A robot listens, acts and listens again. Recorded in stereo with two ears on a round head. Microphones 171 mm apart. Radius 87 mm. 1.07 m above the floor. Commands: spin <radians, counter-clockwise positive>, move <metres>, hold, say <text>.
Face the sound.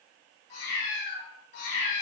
spin 1.05
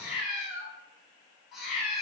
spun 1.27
say Facing the cat meowing.